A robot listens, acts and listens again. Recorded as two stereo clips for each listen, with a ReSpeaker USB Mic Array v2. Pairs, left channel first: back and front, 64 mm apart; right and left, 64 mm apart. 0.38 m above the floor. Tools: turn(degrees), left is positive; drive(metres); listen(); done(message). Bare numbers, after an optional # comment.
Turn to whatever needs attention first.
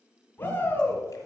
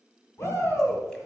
# The shout: 125° right.
turn(-125)
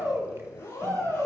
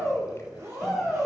done("Found it: a shout, straight ahead, 2 to 4 m away.")